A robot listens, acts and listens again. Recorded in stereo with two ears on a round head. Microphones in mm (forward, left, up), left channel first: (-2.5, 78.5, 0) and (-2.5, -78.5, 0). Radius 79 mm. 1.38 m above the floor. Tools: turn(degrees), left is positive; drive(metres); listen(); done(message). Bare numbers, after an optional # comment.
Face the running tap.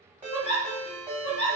listen()
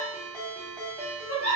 listen()
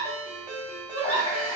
# The running tap: about 35° left or 145° left.
turn(35)
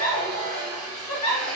done("Facing the running tap.")